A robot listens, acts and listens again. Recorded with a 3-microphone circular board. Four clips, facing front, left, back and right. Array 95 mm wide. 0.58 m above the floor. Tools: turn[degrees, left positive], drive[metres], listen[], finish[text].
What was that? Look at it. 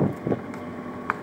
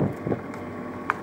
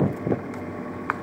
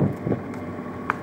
Action: listen[]
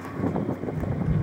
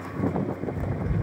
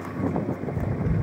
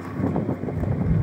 Thought: The tapping: 160° left.
Action: turn[160]
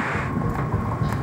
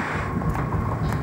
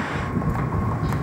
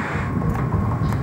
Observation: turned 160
Thought: The tapping is now 20° right.
Action: turn[-20]
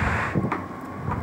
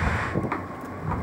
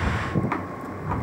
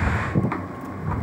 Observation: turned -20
Action: finish[Found it: tapping, straight ahead, under 1 m away.]